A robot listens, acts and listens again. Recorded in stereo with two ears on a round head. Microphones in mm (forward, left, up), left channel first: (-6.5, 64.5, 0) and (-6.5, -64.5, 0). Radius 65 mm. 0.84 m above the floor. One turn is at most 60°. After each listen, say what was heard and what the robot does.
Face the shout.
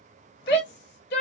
Turn 60° left.
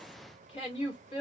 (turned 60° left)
So it is at 40° left. Turn 40° left.
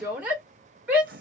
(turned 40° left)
The shout is now 10° right. Turn 10° right.
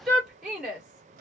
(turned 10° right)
Found it: a shout, straight ahead.